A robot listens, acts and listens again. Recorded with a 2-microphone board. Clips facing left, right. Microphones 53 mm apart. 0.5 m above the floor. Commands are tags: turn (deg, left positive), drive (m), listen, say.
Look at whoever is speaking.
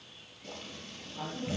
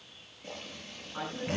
<turn deg="-90"/>
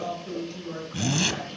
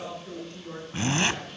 <say>Found it: a woman speaking, straight ahead, over 4 m away.</say>